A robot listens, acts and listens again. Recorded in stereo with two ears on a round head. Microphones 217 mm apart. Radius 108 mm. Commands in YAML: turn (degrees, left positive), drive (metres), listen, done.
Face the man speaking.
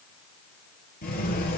listen: true
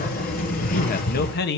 turn: 45
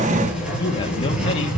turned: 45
listen: true
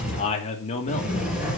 turn: 30
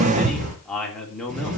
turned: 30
done: "Found it: a man speaking, straight ahead."